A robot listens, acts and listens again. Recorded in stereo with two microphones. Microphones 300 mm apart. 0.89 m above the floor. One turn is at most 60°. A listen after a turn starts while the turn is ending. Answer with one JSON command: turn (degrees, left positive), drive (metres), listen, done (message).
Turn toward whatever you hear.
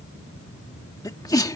{"turn": 30}
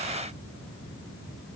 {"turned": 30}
{"listen": true}
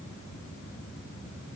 {"done": "I heard a sneeze, but can't make it out now. It was about 20° right or 140° left."}